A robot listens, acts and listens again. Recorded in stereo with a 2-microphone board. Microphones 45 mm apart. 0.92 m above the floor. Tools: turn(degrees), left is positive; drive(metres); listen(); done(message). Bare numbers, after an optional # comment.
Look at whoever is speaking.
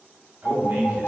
# The man speaking: about 45° right or 135° right.
turn(-45)
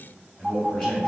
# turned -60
# So it is at 15° left.
turn(15)
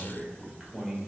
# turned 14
done("Facing the man speaking, 1 to 2 m away.")